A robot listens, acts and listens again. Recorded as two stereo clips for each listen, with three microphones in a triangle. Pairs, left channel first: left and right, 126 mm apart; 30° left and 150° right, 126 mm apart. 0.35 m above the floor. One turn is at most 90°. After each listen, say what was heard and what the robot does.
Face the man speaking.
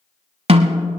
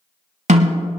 Keep listening.
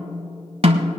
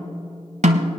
Keep listening.
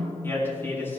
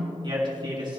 The man speaking: 160° left. Turn 90° left.
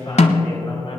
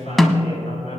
The man speaking is now 50° left. Turn 50° left.
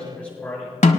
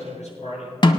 The man speaking is now 10° left. Turn 10° left.
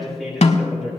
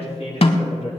Facing the man speaking.